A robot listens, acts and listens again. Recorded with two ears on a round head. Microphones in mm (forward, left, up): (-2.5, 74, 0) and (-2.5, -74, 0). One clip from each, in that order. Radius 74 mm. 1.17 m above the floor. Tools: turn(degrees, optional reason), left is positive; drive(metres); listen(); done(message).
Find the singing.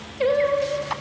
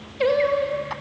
turn(degrees=-30)
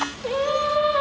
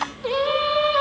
turn(degrees=-25, reason="The singing: about 25° right or 155° right.")
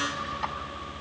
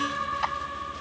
turn(degrees=-140, reason="So it is at 140° right.")
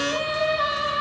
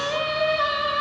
turn(degrees=-15, reason="The singing is now 15° right.")
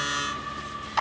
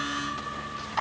done("Facing the singing.")